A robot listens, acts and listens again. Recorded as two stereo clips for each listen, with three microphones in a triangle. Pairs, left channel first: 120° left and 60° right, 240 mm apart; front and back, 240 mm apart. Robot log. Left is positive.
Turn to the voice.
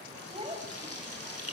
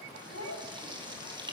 end: Found it: a child speaking, straight ahead, over 4 m away.